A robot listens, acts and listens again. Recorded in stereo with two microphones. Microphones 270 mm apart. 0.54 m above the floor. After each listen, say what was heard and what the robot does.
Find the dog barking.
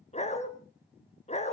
The dog barking: about 25° left or 155° left. Turn 25° left.
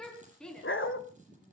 So it is at 130° left. Turn 130° left.
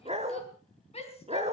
The dog barking is now 25° right. Turn 25° right.
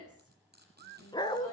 The dog barking is now 15° left. Turn 15° left.
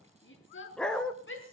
Facing the dog barking.